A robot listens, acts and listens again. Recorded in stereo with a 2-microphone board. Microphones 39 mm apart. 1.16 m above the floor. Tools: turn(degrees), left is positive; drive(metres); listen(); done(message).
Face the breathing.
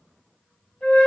listen()
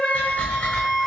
turn(degrees=55)
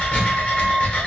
turn(degrees=45)
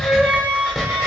done("Facing the breathing, 1 to 2 m away.")